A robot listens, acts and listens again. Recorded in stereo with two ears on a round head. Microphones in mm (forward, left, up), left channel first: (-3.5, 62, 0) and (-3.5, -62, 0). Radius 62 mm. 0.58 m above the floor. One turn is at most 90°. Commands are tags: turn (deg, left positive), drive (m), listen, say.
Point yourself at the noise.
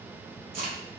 <turn deg="-65"/>
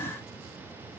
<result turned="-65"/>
<listen/>
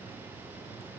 <say>I heard a crack, but can't make it out now. It was about straight ahead or 50° right.</say>